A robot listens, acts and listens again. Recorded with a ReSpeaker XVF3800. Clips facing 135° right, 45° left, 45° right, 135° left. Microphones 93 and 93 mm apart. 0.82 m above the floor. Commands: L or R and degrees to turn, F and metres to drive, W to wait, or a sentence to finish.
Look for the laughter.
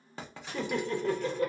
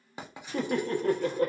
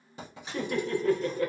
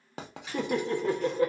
L70
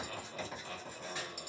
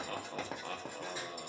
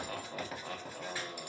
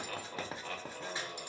L20
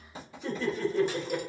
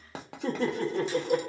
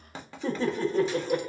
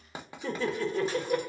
Found it: laughter, straight ahead.